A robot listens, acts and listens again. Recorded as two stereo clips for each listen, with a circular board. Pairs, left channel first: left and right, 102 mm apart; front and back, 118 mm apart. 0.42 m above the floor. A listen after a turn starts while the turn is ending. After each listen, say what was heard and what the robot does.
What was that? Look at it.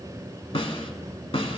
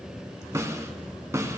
The snare drum: 115° left. Turn 115° left.
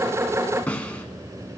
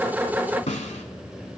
The snare drum is now 15° left. Turn 15° left.
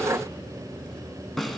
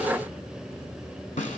Found it: a snare drum, straight ahead, under 1 m away.